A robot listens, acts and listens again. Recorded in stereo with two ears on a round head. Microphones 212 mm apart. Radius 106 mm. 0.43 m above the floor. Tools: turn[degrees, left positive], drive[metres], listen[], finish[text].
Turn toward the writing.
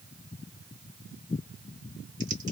Action: listen[]
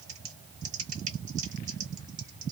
Action: listen[]
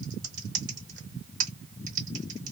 Action: finish[I can't make out writing, only typing on a keyboard.]